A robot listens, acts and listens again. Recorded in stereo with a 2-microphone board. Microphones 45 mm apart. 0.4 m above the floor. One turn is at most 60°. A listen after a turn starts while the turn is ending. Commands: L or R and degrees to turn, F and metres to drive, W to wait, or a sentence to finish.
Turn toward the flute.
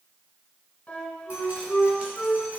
L30
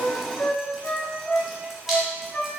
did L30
L60
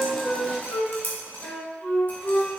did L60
L55
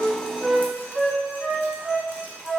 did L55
Facing the flute.